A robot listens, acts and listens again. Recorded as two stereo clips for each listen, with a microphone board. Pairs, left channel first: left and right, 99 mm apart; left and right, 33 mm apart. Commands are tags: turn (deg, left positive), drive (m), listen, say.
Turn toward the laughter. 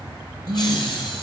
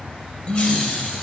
<turn deg="55"/>
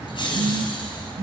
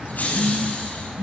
<turn deg="55"/>
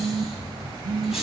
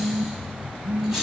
<say>Facing the laughter, over 4 m away.</say>